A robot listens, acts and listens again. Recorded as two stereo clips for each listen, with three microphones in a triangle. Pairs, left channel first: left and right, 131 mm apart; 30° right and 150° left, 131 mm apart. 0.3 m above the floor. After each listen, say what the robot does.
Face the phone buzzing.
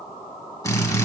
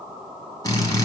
Keep listening.
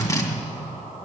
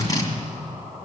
Keep listening.
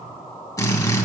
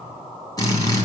I can't make out a phone buzzing to turn to.